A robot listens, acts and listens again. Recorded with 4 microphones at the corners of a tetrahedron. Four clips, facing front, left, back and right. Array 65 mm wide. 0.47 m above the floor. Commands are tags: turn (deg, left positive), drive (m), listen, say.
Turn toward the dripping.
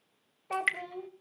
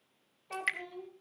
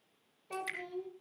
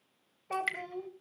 <say>Found it: dripping, straight ahead.</say>